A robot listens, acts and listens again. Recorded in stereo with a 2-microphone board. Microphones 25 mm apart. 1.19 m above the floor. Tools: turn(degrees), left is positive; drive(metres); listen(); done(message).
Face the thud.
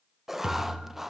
turn(degrees=-25)
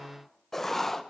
listen()
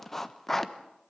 done("I heard a thud, but can't make it out now. It was about straight ahead or 130° right.")